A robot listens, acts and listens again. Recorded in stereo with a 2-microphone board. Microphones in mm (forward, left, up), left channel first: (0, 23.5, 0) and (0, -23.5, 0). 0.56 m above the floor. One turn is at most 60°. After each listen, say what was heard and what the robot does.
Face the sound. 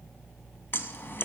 The scissors: about 55° left or 125° left. Turn 55° left.
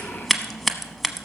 Found it: scissors, straight ahead.